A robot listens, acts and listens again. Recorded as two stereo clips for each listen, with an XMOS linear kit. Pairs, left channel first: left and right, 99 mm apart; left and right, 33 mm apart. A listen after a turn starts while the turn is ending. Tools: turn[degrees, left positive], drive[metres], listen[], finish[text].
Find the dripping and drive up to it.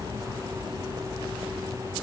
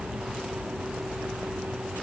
Action: listen[]
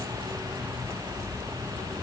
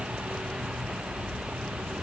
Action: listen[]
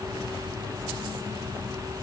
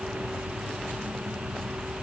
Action: finish[I can't make out dripping.]